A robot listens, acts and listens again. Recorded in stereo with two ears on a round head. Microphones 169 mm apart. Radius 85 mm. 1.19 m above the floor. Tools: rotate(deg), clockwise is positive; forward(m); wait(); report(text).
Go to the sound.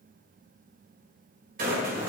rotate(50)
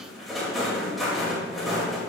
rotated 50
forward(1.0)
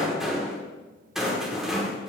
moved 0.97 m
forward(1.0)
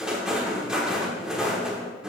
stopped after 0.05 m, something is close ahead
report("Arrived at the rattle, straight ahead.")